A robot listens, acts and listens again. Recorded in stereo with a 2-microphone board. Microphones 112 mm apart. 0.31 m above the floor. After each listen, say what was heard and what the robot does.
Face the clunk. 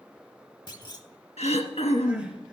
The clunk: about 40° left or 140° left. Turn 40° left.
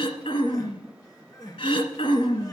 Keep listening.
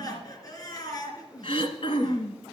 I heard a clunk, but can't make it out now. It was about straight ahead or 100° left.